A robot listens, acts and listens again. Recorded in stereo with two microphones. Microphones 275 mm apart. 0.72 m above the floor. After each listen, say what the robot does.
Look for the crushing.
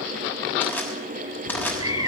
Turn 30° left.
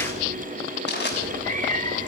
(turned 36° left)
Turn 135° left.
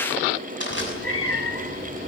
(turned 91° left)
Turn 45° left.
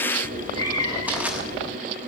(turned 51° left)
Keep listening.
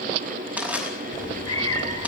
Found it: crushing, straight ahead.